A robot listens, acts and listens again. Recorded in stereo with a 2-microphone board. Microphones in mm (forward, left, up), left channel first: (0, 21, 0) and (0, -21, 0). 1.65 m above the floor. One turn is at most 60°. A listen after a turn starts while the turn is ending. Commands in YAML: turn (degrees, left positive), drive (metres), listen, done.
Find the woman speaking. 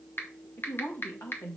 turn: 60
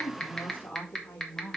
turn: 35
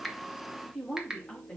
turn: 10
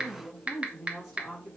done: "Facing the woman speaking, over 4 m away."